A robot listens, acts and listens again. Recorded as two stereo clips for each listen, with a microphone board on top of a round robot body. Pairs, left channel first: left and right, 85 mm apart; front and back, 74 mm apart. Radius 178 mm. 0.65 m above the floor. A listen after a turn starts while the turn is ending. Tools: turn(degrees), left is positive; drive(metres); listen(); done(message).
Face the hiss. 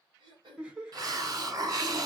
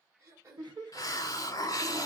turn(degrees=-45)
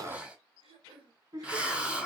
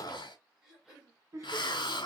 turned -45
turn(degrees=-10)
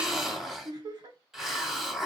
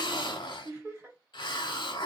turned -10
done("Found it: a hiss, straight ahead.")